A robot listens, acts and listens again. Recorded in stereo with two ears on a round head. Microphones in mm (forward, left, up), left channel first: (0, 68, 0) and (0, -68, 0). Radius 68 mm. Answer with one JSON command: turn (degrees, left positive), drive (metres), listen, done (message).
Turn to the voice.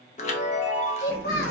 {"turn": 70}
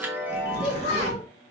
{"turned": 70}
{"turn": 40}
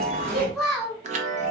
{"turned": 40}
{"done": "Found it: a child speaking, straight ahead, 1 to 2 m away."}